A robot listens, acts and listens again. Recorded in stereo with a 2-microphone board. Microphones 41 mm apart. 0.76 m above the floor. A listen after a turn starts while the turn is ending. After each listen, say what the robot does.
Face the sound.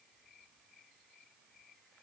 Keep listening.
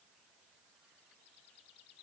Keep listening.
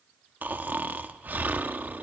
Turn 45° right.
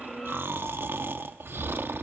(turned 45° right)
Turn 85° right.
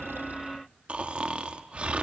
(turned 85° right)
Turn 35° right.
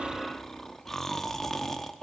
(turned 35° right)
Turn 10° left.
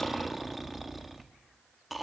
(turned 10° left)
Facing the snoring, under 1 m away.